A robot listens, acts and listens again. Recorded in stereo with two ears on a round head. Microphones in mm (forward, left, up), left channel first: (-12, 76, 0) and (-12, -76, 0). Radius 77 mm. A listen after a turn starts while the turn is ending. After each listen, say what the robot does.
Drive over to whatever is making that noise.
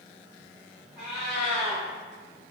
Turn 30° right.
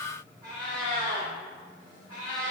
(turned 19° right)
Turn 155° right.
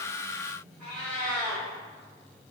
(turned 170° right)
Turn 15° left.
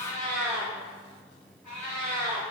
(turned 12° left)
Drive 1.0 m forward.
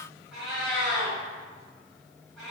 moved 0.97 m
Drive 1.0 m forward.
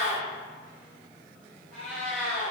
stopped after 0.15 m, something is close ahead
I am next to the cat meowing.